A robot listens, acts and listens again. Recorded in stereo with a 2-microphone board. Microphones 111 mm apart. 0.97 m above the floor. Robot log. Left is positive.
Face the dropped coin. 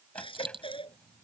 note: The dropped coin: about 50° right or 130° right.
cmd yaw -50
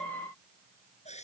cmd idle
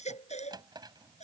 end: I heard a dropped coin, but can't make it out now. It was about straight ahead or 80° right.